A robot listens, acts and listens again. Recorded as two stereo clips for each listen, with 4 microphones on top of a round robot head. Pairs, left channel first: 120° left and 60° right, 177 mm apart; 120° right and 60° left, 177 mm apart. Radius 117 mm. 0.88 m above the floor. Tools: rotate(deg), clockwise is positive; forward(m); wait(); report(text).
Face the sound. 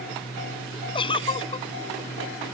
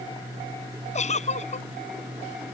rotate(175)
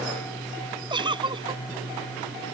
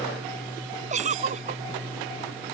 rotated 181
report("Facing the giggle.")